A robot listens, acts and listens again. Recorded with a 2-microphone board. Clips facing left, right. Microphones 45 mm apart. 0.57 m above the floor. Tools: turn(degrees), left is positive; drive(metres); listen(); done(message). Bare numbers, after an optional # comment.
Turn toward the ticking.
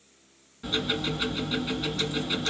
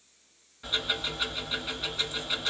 turn(30)
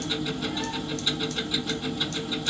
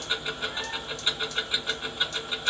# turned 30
# So it is at 30° right.
turn(-30)
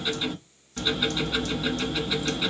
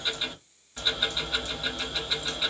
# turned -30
done("Facing the ticking.")